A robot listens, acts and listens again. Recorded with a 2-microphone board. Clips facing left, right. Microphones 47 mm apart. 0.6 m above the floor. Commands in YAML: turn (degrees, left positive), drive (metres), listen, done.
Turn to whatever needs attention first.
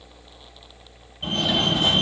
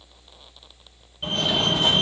turn: -30
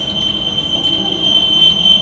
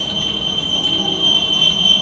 turn: 15
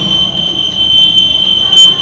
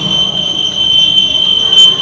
done: "Facing the fire alarm."